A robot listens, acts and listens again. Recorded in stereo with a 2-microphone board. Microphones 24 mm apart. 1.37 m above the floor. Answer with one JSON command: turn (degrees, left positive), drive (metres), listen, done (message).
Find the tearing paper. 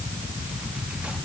{"listen": true}
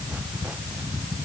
{"listen": true}
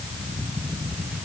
{"done": "I can't make out tearing paper."}